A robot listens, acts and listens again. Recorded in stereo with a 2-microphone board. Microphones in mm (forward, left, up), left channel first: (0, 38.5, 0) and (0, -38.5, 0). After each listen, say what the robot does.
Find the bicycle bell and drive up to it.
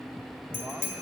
Turn 40° right.
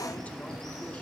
Keep listening.
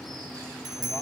Turn 100° right.
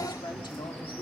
Keep listening.
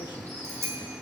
Turn 30° right.
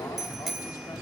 Drive 1.0 m forward.
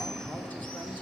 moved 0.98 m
Keep listening.
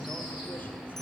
Drive 1.0 m forward.
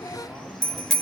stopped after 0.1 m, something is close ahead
Arrived at the bicycle bell, straight ahead.